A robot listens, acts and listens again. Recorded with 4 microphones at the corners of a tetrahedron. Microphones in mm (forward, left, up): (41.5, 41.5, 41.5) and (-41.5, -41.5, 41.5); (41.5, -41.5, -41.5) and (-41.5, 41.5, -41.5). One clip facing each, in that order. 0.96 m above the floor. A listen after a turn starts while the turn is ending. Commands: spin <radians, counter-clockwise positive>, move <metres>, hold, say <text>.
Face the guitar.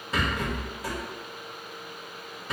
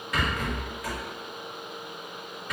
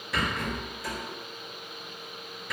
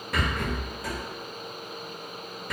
hold
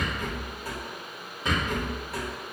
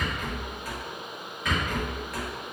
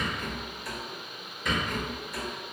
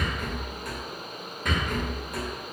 hold
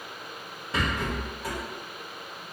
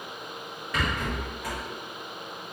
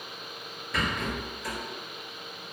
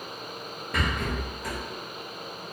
say I can't make out a guitar, only a rattle.